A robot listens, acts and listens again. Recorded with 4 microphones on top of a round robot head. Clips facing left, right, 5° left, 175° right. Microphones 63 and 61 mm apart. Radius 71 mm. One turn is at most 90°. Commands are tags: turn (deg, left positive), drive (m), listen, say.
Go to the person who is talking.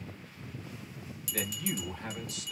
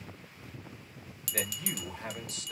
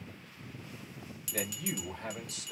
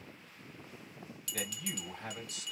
<turn deg="-35"/>
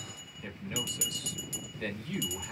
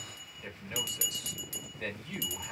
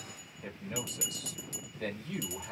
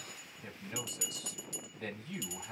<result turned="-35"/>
<turn deg="-10"/>
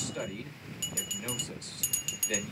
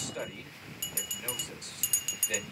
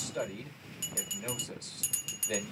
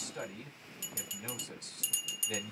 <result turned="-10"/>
<drive m="1.0"/>
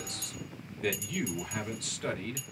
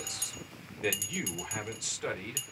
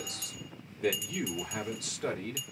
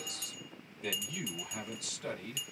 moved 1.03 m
<turn deg="-10"/>
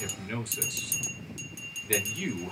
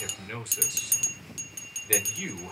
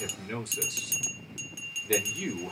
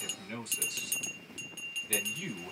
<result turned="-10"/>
<drive m="1.0"/>
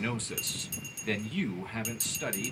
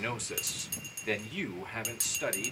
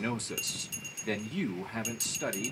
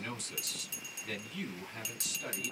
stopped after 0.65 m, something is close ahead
<turn deg="-10"/>
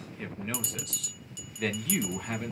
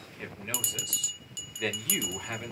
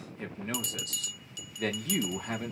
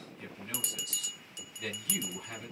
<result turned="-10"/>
<say>Arrived at the man speaking, straight ahead.</say>